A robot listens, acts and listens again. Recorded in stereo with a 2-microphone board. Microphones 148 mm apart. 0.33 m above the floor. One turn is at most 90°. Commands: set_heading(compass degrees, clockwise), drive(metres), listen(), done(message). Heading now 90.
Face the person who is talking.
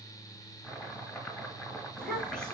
set_heading(60)
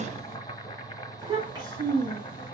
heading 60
set_heading(90)
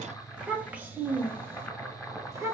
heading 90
set_heading(110)
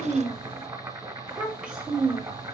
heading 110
done("Facing the child speaking, 1 to 2 m away.")